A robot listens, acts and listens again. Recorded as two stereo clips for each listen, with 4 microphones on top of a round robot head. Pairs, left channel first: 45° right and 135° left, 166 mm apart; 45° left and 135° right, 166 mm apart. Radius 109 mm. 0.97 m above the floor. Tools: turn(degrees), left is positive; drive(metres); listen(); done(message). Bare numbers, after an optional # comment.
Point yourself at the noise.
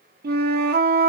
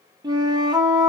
# The flute: 160° left.
turn(160)
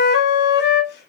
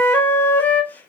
# The flute is now 35° right.
turn(-35)
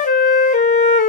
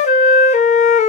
done("Facing the flute.")